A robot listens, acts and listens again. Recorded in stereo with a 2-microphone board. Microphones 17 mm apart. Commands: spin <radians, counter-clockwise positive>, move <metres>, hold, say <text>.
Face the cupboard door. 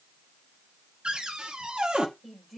spin -1.57
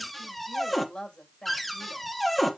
spin 0.17
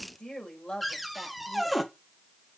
say Facing the cupboard door, 1 to 2 m away.